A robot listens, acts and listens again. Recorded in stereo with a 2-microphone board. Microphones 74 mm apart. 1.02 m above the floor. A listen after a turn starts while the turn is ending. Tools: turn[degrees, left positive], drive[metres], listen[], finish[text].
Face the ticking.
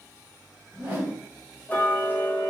Thought: The ticking: about 25° left or 155° left.
Action: turn[25]
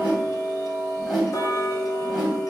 Thought: So it is at 130° left.
Action: turn[130]
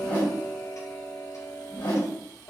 Thought: The ticking is now 45° left.
Action: turn[45]
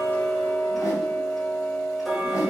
Action: finish[Found it: ticking, straight ahead, under 1 m away.]